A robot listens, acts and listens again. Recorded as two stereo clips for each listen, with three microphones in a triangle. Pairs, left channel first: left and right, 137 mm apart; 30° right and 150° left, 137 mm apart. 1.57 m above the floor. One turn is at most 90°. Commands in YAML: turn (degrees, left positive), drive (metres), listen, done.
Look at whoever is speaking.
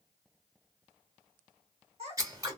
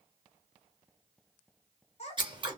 turn: -60
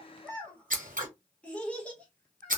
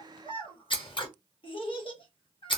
turn: 10
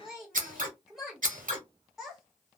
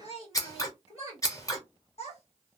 done: "Found it: a child speaking, straight ahead."